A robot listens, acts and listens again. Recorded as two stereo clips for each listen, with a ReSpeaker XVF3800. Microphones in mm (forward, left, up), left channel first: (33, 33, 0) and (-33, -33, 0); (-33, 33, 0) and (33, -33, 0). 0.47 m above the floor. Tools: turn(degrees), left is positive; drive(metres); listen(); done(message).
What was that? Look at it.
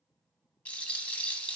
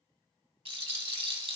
turn(degrees=-30)
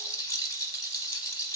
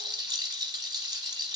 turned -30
done("Facing the rattle.")